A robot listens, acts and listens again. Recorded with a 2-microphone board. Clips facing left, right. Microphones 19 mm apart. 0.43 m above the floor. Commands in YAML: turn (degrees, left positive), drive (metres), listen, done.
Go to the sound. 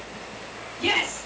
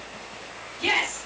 turn: -30
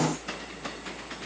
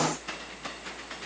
listen: true
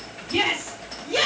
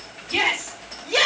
turn: -145
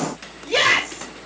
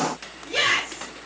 turn: 50
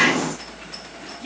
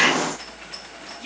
turn: -20
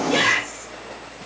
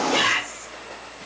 drive: 1.0
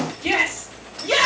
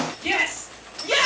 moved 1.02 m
drive: 1.0
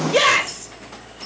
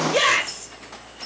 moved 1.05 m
turn: 15
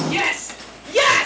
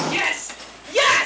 drive: 1.0
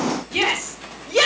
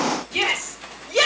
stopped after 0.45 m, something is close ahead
done: "Arrived at the shout, straight ahead."